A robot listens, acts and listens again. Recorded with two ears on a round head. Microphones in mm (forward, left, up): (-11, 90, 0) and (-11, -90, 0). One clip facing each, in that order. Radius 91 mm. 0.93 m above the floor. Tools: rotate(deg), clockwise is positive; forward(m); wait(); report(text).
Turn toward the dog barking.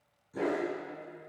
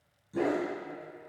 rotate(55)
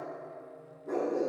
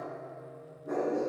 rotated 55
rotate(10)
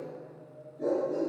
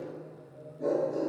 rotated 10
report("Facing the dog barking, 2 to 4 m away.")